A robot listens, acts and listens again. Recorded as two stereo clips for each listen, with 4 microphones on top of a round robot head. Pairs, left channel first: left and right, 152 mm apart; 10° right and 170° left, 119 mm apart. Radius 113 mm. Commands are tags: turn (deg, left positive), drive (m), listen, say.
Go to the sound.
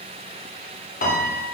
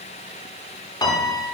<turn deg="50"/>
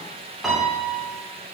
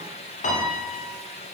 <drive m="1.0"/>
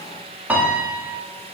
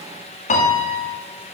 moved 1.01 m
<turn deg="-10"/>
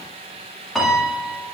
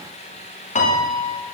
<drive m="1.0"/>
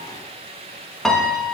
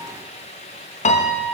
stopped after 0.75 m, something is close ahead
<say>I am next to the piano.</say>